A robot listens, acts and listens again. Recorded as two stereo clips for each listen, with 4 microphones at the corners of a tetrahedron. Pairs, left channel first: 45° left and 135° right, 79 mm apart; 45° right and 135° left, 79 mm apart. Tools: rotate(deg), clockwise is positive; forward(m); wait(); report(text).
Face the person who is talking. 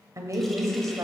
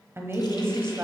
rotate(175)
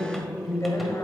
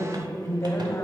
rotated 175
report("Facing the woman speaking, 1 to 2 m away.")